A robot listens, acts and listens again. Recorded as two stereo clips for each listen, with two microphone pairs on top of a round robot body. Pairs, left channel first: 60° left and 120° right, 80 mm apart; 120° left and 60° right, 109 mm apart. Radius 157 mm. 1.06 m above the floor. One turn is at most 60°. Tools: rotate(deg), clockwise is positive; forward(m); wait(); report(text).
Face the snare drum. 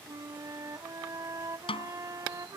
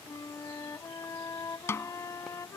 rotate(-55)
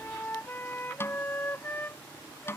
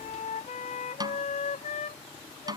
report("Found it: a snare drum, straight ahead.")